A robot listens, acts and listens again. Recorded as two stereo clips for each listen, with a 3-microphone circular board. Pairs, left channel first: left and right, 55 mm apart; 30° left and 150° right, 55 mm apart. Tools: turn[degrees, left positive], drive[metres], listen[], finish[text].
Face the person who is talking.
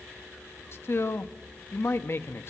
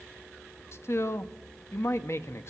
Thought: The man speaking: 55° left.
Action: turn[55]
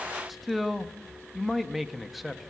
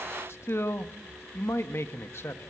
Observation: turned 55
Action: finish[Facing the man speaking, under 1 m away.]